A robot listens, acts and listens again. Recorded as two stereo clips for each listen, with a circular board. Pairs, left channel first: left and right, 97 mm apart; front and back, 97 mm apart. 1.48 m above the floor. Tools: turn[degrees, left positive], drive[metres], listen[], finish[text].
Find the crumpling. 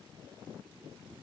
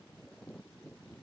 Action: listen[]
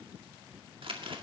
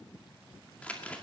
Thought: The crumpling: 75° right.
Action: turn[-75]
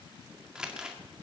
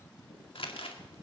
Thought: The crumpling is now 10° right.
Action: turn[-10]
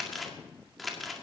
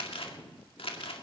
Action: finish[Found it: crumpling, straight ahead, 1 to 2 m away.]